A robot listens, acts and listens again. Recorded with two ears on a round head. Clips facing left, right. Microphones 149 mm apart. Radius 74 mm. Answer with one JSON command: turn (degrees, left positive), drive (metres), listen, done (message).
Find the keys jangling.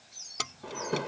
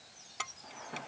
{"turn": 45}
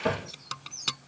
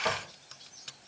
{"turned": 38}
{"turn": 100}
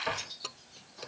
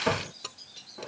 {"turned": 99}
{"done": "Facing the keys jangling."}